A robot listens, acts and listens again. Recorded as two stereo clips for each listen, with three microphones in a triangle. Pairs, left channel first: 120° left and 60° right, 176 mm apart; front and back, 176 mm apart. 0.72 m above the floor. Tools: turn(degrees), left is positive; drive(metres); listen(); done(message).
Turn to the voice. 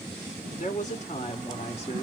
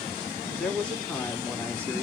turn(degrees=85)
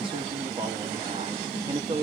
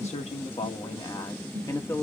turn(degrees=-60)
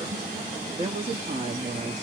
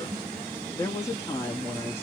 turn(degrees=-70)
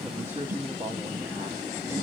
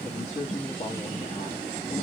turn(degrees=10)
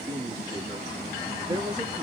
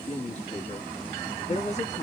done("Found it: a woman speaking, straight ahead, 1 to 2 m away.")